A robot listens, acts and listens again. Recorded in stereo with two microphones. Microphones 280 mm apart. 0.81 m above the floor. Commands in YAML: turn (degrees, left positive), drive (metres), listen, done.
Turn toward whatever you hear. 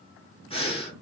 turn: 20
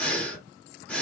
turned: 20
done: "Found it: breathing, straight ahead, 1 to 2 m away."